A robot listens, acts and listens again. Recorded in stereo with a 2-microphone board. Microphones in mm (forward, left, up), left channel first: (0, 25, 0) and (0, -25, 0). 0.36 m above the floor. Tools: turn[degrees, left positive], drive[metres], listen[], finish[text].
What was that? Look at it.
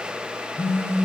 Thought: The phone buzzing: about 50° left or 130° left.
Action: turn[50]
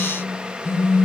Thought: So it is at 65° left.
Action: turn[65]
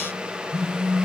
Action: finish[Facing the phone buzzing.]